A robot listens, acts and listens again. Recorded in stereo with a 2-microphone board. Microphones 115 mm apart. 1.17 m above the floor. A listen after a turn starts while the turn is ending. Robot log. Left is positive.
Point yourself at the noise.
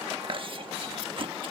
note: The chewing: about 50° right or 130° right.
cmd yaw -50
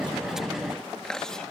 end: Facing the chewing.